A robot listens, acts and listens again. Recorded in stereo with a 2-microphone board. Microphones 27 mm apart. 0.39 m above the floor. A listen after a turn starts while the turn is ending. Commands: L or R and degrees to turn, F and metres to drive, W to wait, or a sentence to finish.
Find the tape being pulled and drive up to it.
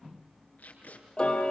L90
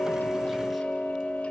W
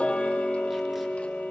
W
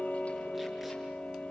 I heard tape being pulled from this way, but can't make it out now. I did not reach it.